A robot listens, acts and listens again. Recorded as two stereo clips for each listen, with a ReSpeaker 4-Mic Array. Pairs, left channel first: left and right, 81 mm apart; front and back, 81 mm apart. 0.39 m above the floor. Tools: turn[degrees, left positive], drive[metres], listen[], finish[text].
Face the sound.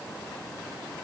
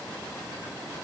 Action: listen[]
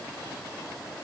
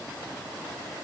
Action: listen[]
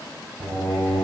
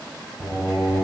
Thought: The singing: 125° right.
Action: turn[-125]
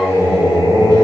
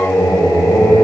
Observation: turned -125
Thought: The singing is now 65° right.
Action: turn[-65]
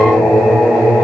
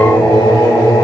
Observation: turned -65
Action: finish[Facing the singing, 1 to 2 m away.]